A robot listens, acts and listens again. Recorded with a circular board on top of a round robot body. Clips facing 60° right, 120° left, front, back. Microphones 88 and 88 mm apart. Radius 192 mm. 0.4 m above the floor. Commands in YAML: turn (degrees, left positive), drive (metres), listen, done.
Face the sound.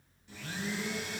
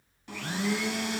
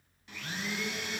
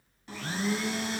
turn: 130
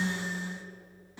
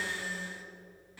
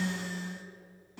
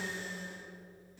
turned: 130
done: "Found it: a blender, straight ahead."